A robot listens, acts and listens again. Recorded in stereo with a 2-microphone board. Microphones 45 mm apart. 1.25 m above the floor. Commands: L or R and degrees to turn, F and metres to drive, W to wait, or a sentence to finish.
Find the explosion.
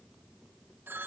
W
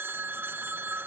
W
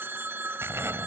R70
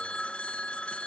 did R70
W
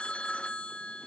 I heard an explosion, but can't make it out now. It was about straight ahead or 40° right.